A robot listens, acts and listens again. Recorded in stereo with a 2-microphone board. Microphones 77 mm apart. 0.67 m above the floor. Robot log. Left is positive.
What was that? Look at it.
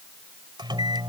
note: The microwave: about 75° right or 105° right.
cmd yaw -75
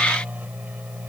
note: So it is at 20° right.
cmd yaw -20
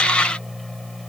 end: Facing the microwave.